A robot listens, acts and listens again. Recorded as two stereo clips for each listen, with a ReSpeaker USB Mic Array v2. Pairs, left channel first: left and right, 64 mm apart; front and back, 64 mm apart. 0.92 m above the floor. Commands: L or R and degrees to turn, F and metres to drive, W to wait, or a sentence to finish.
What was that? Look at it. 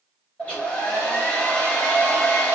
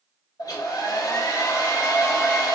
L20
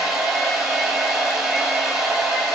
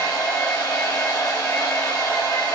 Found it: a hair dryer, straight ahead.